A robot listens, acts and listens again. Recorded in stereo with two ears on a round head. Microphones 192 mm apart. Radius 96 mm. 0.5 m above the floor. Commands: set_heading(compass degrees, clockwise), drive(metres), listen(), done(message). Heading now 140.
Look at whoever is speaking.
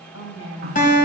set_heading(70)
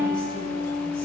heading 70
listen()
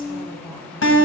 set_heading(45)
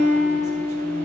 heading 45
listen()
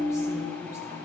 listen()
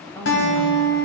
set_heading(30)
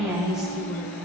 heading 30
done("Found it: a woman speaking, straight ahead, 2 to 4 m away.")